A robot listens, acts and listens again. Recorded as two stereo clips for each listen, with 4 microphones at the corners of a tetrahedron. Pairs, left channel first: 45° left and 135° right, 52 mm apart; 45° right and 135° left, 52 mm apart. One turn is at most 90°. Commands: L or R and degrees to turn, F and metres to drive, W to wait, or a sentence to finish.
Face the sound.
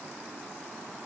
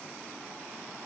W
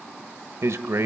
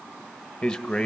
R90
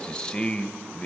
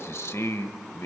R30
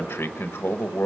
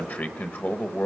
Found it: a man speaking, straight ahead, 1 to 2 m away.